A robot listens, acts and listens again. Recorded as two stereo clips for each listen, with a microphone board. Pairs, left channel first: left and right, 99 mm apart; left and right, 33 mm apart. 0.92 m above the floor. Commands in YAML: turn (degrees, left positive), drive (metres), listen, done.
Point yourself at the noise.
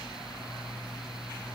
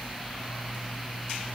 listen: true
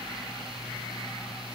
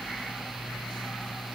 listen: true
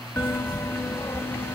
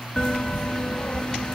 turn: 25
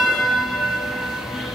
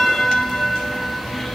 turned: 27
done: "Found it: a bell, straight ahead."